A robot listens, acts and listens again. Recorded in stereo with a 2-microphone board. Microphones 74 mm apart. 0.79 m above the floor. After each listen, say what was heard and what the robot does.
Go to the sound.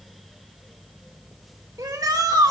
The shout: about 60° right or 120° right. Turn 60° right.
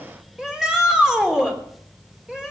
So it is at 10° right. Turn 10° right.
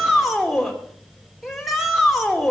Drive 1.0 m forward.
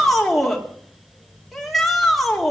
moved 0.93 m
Drive 1.0 m forward.
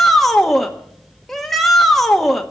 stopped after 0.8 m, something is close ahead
Arrived at the shout, straight ahead.